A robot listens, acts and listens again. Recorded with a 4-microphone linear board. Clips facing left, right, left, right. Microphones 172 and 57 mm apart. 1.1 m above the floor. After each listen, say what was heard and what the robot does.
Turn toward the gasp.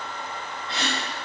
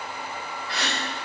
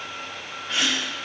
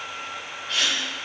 The gasp: about 25° left or 155° left. Turn 25° left.
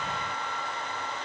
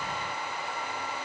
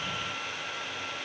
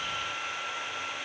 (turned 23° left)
Keep listening.
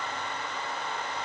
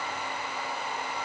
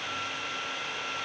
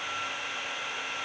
I heard a gasp, but can't make it out now. It was about straight ahead or 135° left.